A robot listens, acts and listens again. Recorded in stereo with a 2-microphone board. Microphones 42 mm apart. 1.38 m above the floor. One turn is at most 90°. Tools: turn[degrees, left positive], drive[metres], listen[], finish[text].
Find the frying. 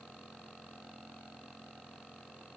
Action: listen[]
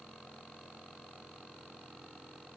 Action: listen[]
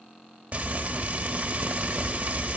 Thought: The frying: about 35° right or 145° right.
Action: turn[-35]
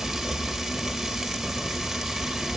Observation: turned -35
Action: finish[Facing the frying, 1 to 2 m away.]